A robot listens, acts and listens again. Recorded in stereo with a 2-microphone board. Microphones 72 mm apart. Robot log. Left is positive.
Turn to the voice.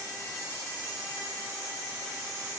cmd idle
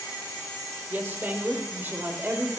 note: The woman speaking: about 30° right or 150° right.
cmd yaw -30
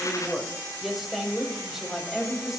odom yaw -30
end: Found it: a woman speaking, straight ahead, over 4 m away.